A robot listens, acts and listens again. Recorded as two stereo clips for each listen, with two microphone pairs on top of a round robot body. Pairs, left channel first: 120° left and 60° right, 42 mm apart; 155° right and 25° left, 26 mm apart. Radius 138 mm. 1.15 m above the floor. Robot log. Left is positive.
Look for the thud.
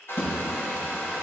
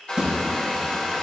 note: The thud: 85° left.
cmd yaw +85
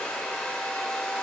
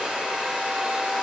end: Facing where the thud came from. I can't hear it now.